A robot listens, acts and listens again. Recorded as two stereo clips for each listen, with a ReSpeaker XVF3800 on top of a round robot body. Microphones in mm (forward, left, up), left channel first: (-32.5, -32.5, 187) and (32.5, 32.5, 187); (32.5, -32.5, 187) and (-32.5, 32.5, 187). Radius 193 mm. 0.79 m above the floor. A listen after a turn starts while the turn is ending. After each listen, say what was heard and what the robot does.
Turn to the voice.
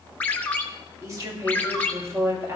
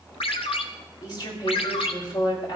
The woman speaking: 15° right. Turn 15° right.
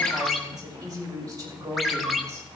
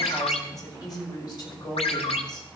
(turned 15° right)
Facing the woman speaking.